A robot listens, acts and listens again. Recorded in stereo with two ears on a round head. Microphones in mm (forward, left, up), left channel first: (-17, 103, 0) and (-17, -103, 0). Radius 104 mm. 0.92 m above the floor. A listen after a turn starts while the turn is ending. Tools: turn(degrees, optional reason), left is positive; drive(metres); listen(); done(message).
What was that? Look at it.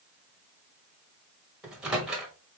turn(degrees=-30)
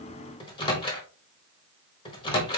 turn(degrees=25, reason="So it is at 25° left.")
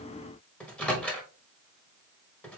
done("Found it: a microwave, straight ahead.")